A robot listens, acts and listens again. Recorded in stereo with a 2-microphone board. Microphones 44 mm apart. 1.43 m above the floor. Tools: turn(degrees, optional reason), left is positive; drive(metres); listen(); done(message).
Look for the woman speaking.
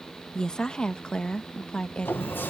turn(degrees=25, reason="The woman speaking: about 25° left or 155° left.")
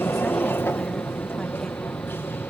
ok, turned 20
listen()
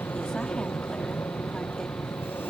listen()
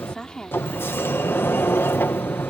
turn(degrees=20, reason="The woman speaking: about 20° left or 160° left.")
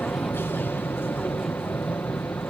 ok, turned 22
listen()
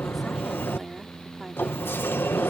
listen()
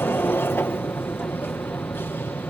done("I heard a woman speaking, but can't make it out now. It was about 5° right or 140° left.")